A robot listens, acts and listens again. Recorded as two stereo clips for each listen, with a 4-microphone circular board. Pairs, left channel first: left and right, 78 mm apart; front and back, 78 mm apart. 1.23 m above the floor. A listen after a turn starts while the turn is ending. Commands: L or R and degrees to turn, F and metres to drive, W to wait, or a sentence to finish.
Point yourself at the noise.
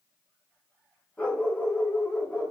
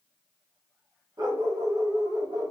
L160
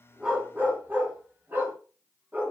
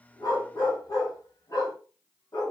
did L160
R30
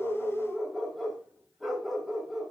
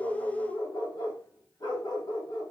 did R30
Facing the dog barking.